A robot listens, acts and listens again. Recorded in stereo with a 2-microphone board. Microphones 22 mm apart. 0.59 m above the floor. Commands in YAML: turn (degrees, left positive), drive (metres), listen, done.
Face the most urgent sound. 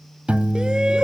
turn: -45
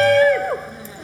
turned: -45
done: "Facing the shout."